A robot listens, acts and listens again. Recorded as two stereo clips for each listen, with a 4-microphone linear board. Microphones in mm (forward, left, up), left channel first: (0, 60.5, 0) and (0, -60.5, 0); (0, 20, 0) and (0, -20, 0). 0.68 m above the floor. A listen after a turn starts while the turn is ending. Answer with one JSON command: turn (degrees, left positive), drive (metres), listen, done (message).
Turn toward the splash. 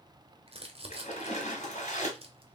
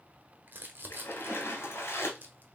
{"turn": 65}
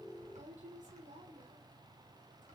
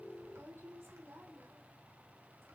{"listen": true}
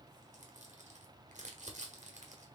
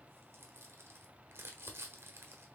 {"done": "I heard a splash, but can't make it out now. It was about straight ahead or 50° left."}